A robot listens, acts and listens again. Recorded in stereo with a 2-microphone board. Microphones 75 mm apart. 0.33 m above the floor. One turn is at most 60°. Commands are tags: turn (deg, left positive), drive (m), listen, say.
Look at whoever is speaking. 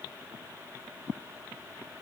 <listen/>
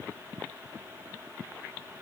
<listen/>
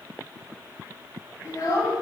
<turn deg="50"/>
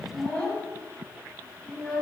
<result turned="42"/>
<turn deg="15"/>
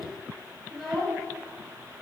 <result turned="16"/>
<say>Found it: a child speaking, straight ahead.</say>